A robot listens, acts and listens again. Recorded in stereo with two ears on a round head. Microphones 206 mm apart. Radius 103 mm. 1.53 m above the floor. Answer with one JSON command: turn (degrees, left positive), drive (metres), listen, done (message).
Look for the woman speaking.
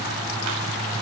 {"listen": true}
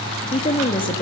{"turn": 20}
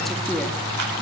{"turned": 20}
{"listen": true}
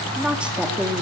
{"done": "Found it: a woman speaking, straight ahead, 2 to 4 m away."}